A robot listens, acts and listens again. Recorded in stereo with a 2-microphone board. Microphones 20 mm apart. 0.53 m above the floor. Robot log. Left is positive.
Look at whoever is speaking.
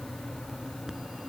cmd idle
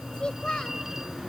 note: The child speaking: about 45° left or 135° left.
cmd yaw +45
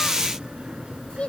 note: So it is at 90° left.
cmd yaw +90
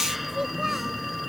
cmd idle
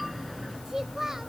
note: The child speaking is now 20° right.
cmd yaw -20
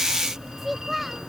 end: Facing the child speaking.